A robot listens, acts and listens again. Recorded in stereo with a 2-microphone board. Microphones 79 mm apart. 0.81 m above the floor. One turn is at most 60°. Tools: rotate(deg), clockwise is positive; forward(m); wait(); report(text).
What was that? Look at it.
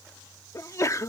rotate(-40)
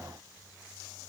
wait()
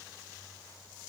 report("I heard a sneeze, but can't make it out now. It was about straight ahead or 100° left.")